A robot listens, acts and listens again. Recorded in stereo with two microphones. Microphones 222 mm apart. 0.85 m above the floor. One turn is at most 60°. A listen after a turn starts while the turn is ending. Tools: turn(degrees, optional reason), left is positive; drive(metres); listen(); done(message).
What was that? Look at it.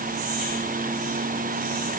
listen()
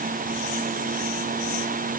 listen()
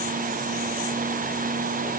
done("I can't make out anything to turn to.")